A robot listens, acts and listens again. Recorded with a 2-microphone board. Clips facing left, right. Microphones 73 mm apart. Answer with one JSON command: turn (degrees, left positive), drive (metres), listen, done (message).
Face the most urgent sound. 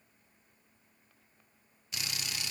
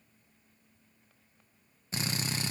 {"listen": true}
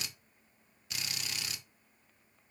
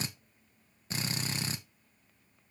{"listen": true}
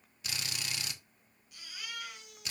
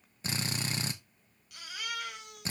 {"turn": -70}
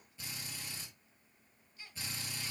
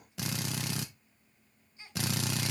{"turn": -25}
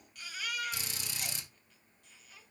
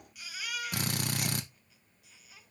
{"done": "Facing the baby crying, 2 to 4 m away."}